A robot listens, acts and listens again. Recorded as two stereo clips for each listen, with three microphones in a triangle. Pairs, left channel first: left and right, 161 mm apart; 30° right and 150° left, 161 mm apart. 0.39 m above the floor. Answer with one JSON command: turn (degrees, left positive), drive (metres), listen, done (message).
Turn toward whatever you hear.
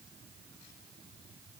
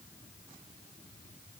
{"listen": true}
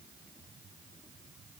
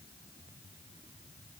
{"listen": true}
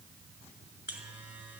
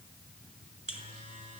{"turn": -170}
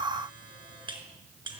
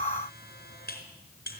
{"turn": -30}
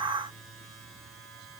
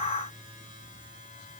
{"done": "Found it: a buzzer, straight ahead."}